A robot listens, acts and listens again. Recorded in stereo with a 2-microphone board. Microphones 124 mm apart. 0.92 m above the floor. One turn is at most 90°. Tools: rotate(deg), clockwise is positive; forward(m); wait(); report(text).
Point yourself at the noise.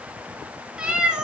rotate(30)
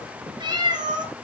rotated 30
rotate(90)
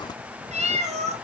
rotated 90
rotate(65)
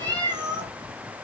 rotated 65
rotate(35)
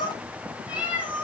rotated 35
rotate(10)
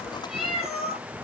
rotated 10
report("Found it: a cat meowing, straight ahead.")